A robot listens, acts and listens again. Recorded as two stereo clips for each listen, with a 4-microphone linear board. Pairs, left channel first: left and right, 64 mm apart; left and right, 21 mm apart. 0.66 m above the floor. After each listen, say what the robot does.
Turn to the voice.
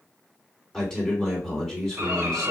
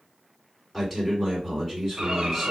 Turn 30° left.
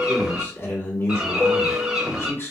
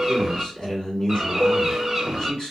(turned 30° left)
Turn 140° left.
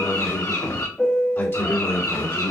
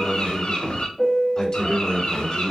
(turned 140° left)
Turn 45° left.
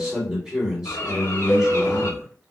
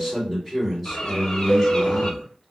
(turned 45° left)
Turn 10° right.
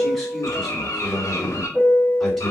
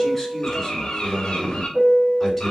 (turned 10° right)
Found it: a man speaking, straight ahead, 2 to 4 m away.